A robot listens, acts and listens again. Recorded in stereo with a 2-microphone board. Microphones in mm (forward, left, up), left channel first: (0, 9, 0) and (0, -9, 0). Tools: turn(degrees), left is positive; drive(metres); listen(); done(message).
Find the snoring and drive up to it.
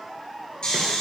turn(degrees=40)
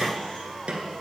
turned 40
listen()
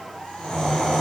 turn(degrees=100)
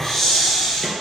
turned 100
turn(degrees=20)
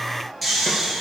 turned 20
drive(metres=1.0)
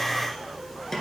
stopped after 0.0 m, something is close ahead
listen()
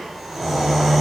done("Blocked. The snoring is further on, straight ahead.")